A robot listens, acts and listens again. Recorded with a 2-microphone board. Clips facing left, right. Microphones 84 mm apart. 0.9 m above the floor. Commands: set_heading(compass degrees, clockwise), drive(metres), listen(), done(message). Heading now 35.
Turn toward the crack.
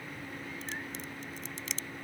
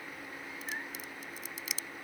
set_heading(65)
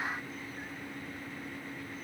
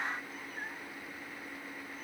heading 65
listen()
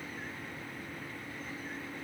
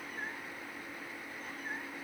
done("I heard a crack, but can't make it out now. It was about 25° left or 145° right.")